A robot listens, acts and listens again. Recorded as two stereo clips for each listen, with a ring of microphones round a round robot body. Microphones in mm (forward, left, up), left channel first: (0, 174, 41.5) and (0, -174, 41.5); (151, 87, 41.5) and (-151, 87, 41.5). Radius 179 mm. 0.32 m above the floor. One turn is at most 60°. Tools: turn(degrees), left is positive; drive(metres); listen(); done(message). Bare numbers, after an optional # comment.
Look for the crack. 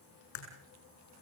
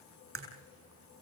# The crack: 135° left.
turn(60)
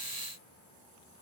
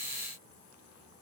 # Nothing new. It was at 75° left.
turn(60)
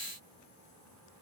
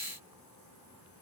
# Nothing new. It was at 15° left.
turn(15)
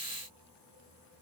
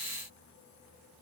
done("I heard a crack from this way, but can't make it out now.")